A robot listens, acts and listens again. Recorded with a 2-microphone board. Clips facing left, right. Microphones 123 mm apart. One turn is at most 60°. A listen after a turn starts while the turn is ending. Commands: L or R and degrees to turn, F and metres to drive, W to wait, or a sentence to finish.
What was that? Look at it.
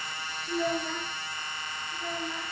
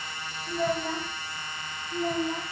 R40
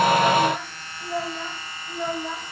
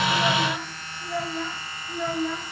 L20
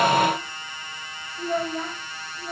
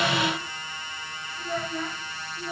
L25
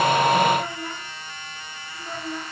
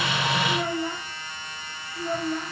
R15
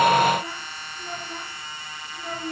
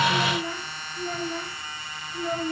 Found it: a child speaking, straight ahead, 2 to 4 m away.